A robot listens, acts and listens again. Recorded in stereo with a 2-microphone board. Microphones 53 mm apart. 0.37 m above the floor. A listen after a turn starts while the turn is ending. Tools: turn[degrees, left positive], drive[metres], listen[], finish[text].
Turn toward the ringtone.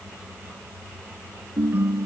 Thought: The ringtone: about 35° right or 145° right.
Action: turn[-35]
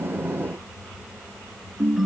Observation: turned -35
Action: finish[Facing the ringtone.]